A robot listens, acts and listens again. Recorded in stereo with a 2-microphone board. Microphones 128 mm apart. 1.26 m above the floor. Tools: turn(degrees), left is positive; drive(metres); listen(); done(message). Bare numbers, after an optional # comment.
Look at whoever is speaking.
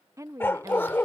# The woman speaking: about 25° right or 155° right.
turn(-25)
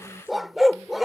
listen()
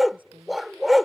# So it is at 125° right.
turn(-125)
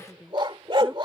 done("Found it: a woman speaking, straight ahead.")